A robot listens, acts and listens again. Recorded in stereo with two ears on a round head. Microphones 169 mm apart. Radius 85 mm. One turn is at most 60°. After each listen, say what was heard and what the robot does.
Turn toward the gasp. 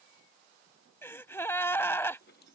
Turn 30° left.
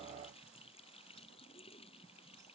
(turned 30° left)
Keep listening.
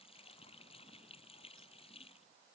I heard a gasp, but can't make it out now. It was about 15° right or 135° left.